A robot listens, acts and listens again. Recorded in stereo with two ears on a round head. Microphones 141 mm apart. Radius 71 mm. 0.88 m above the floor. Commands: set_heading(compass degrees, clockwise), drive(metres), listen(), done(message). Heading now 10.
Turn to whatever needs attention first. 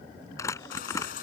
set_heading(310)
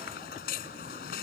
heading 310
set_heading(250)
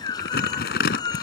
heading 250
set_heading(225)
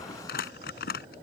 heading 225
listen()
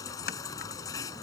set_heading(200)
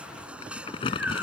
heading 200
done("Found it: a baby crying, straight ahead.")